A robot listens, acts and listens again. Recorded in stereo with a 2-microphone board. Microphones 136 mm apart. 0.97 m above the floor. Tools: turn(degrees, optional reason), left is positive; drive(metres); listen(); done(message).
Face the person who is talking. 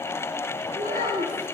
turn(degrees=-65, reason="The child speaking: about 65° right or 115° right.")
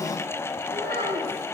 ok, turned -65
turn(degrees=-85, reason="So it is at 85° right.")
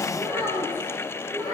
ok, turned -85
turn(degrees=-20, reason="The child speaking is now 20° right.")
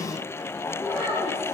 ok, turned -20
done("Facing the child speaking, 2 to 4 m away.")